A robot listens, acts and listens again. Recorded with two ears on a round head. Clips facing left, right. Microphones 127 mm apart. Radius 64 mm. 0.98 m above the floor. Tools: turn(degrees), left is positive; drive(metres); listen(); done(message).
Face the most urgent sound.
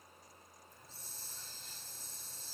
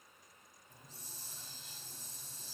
listen()
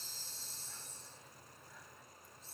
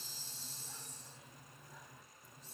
listen()
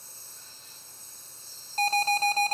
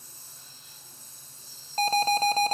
turn(degrees=-65)
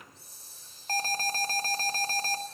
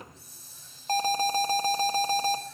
turn(degrees=-20)
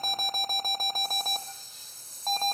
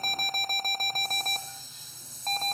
done("Found it: an alarm, straight ahead, 1 to 2 m away.")